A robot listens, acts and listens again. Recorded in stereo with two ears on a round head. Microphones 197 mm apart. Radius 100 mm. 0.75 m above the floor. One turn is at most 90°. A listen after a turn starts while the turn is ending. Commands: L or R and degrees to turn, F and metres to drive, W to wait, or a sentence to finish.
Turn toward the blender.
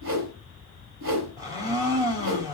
R15
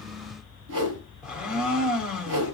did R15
Facing the blender.